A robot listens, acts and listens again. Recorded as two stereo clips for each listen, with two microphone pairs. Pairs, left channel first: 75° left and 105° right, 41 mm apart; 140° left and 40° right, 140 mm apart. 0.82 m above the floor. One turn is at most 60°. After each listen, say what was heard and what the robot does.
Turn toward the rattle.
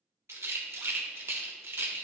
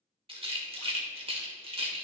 The rattle: 90° right. Turn 60° right.
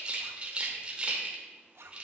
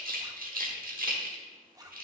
The rattle is now 40° right. Turn 40° right.
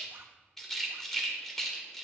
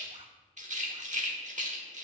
Found it: a rattle, straight ahead, 1 to 2 m away.